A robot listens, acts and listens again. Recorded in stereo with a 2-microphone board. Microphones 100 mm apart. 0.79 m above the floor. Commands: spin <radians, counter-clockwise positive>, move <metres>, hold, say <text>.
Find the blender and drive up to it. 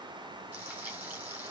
hold
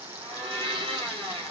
spin -1.05
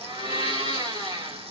spin -1.05
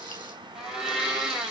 move 1.0
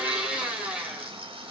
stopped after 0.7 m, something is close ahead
spin -0.17
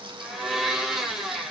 say Something is in my way. I am facing the blender but have not reached it.